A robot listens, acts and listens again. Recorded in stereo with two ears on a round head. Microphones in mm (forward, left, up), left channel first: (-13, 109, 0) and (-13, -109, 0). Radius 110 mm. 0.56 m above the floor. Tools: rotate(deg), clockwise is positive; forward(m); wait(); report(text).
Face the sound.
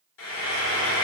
rotate(-55)
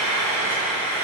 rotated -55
rotate(-20)
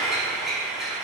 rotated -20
report("Facing the frying, 1 to 2 m away.")